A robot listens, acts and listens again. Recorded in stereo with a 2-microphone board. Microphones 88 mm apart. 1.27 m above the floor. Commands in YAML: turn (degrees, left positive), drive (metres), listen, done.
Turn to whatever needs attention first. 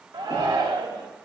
turn: -60
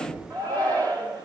turn: -55
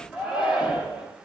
turn: -10
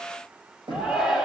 done: "Found it: a shout, straight ahead."